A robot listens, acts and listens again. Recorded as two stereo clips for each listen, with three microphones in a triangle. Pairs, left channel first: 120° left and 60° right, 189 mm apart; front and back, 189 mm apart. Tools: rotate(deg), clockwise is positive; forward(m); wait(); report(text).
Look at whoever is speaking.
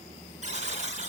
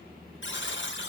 wait()
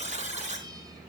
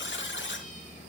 wait()
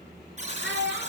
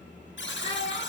rotate(55)
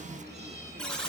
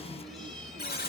wait()
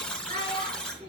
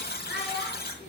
rotate(15)
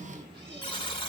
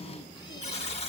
wait()
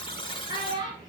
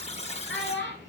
report("Facing the child speaking.")